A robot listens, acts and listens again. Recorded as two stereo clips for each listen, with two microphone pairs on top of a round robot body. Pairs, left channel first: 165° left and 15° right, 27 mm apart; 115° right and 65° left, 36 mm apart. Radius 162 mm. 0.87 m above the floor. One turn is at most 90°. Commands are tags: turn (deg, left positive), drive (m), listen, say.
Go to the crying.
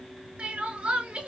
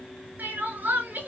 <turn deg="35"/>
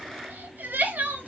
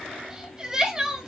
<turn deg="-10"/>
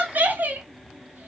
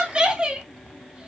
<drive m="1.0"/>
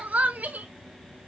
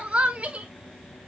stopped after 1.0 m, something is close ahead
<turn deg="10"/>
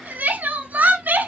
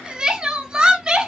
<say>I am next to the crying.</say>